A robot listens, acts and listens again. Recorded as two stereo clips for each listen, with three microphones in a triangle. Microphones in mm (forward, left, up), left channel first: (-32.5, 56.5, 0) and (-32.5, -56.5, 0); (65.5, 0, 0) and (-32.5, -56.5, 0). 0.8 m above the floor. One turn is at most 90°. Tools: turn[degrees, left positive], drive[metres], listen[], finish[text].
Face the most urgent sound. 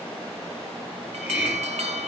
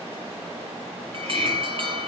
Thought: The alarm: 110° right.
Action: turn[-90]
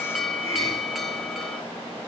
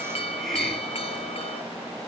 Action: finish[Found it: an alarm, straight ahead.]